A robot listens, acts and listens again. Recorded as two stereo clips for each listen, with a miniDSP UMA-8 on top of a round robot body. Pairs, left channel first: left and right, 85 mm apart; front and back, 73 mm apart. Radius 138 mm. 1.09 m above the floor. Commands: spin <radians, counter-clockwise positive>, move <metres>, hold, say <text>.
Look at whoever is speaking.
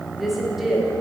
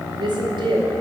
spin 3.14
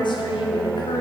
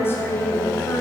spin 1.05
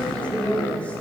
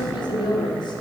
spin 0.26
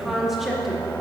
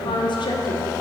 say Found it: a woman speaking, straight ahead.